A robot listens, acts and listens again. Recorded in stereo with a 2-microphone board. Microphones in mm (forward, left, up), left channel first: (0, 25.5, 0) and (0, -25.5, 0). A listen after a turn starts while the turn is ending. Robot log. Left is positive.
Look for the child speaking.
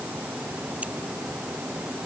cmd idle
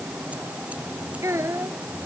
note: The child speaking: about 70° right or 110° right.
cmd yaw -70
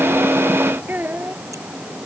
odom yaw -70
note: So it is at 40° right.
cmd yaw -40
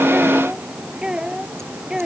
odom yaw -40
note: The child speaking is now 20° right.
cmd yaw -20
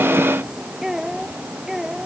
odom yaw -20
note: The child speaking is now 10° right.
cmd yaw -10
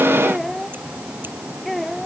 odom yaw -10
end: Facing the child speaking.